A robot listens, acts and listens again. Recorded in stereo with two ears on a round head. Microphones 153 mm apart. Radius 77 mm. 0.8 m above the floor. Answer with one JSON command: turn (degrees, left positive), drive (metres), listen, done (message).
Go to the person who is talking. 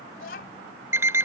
{"turn": 60}
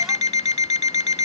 {"listen": true}
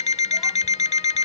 {"listen": true}
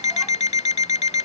{"done": "I heard a child speaking, but can't make it out now. It was about straight ahead or 60° left. I did not reach it."}